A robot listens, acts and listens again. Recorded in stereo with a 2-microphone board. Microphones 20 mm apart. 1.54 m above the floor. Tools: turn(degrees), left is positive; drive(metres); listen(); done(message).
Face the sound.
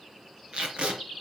turn(degrees=-65)
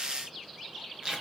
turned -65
turn(degrees=-40)
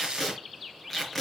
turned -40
turn(degrees=15)
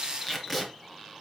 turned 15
done("Found it: tape being pulled, straight ahead, 2 to 4 m away.")